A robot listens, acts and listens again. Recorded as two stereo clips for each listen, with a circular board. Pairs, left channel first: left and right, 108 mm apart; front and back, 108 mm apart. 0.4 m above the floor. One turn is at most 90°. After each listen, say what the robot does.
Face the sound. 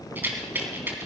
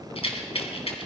Turn 20° right.
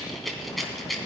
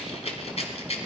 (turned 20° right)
Found it: a rattle, straight ahead.